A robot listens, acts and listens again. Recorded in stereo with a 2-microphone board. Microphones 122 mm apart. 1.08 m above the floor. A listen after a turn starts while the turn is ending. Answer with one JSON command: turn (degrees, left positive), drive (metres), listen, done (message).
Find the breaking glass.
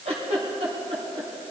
{"listen": true}
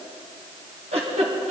{"listen": true}
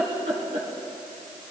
{"done": "I can't make out breaking glass, only a giggle."}